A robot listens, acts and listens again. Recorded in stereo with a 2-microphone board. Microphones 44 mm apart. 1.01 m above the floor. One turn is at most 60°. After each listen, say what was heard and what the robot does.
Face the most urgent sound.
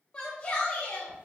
The shout: about 25° left or 155° left. Turn 25° left.
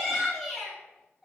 Found it: a shout, straight ahead.